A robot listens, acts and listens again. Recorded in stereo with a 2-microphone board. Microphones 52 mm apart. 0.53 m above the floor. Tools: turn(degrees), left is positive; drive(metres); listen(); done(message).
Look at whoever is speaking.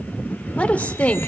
turn(degrees=30)
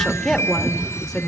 done("Facing the woman speaking, 1 to 2 m away.")